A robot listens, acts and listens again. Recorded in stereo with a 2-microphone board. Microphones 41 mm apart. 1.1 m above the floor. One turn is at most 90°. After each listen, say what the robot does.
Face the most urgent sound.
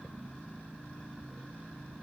Keep listening.
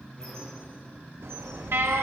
Turn 90° right.
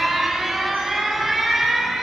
Facing the alarm.